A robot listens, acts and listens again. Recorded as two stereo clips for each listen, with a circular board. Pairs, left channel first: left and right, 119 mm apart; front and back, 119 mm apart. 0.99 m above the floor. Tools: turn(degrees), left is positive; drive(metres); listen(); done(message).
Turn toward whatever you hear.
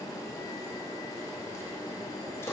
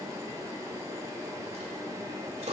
turn(degrees=155)
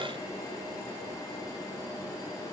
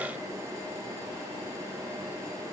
done("I heard a dropped coin from this way, but can't make it out now.")